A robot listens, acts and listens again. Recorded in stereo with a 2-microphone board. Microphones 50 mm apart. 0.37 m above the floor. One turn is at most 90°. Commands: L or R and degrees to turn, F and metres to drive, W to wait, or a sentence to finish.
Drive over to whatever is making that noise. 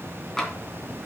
L30
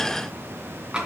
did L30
R20
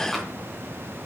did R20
W
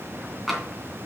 F1.0
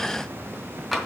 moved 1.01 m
F1.0
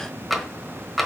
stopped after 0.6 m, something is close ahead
I am next to the tapping.